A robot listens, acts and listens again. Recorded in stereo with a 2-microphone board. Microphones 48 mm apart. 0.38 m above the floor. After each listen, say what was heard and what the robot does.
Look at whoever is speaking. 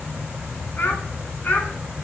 The child speaking: about 35° left or 145° left. Turn 35° left.
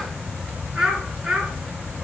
So it is at 15° right. Turn 15° right.
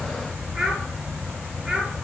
The child speaking is now 15° right. Turn 15° right.
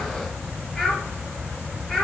Found it: a child speaking, straight ahead.